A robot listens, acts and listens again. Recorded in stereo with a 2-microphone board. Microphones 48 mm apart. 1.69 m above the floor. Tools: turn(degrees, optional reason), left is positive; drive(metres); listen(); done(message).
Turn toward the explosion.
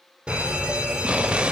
turn(degrees=-25, reason="The explosion: about 25° right or 155° right.")
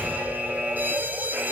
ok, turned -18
listen()
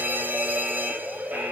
done("I heard an explosion, but can't make it out now. It was about 5° right or 140° right.")